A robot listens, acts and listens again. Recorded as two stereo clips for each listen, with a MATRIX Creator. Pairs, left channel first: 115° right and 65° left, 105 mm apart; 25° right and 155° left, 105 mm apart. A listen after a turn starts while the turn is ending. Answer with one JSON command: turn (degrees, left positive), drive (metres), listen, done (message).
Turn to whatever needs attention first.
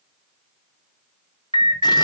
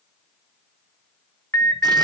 {"turn": 40}
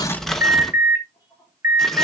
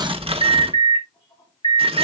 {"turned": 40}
{"done": "Found it: an alarm, straight ahead."}